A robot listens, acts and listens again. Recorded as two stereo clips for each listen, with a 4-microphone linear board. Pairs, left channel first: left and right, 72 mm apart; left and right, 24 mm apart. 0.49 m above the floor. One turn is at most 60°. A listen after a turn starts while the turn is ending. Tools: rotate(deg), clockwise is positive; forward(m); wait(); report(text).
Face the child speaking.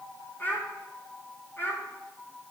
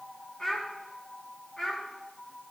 rotate(-30)
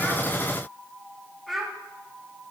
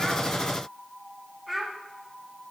report("Facing the child speaking.")